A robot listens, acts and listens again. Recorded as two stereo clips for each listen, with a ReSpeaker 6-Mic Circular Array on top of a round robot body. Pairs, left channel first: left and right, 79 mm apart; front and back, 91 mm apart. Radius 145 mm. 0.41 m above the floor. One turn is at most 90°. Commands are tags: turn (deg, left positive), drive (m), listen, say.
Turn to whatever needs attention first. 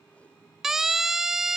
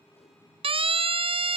<turn deg="-90"/>
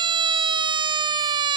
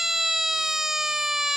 <turn deg="-90"/>
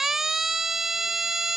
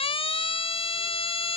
<say>Facing the siren.</say>